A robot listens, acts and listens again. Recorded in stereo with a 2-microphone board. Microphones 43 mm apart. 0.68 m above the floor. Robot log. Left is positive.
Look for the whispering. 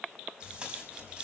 cmd idle
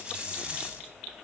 cmd idle
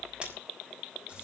end: I can't make out whispering to turn to.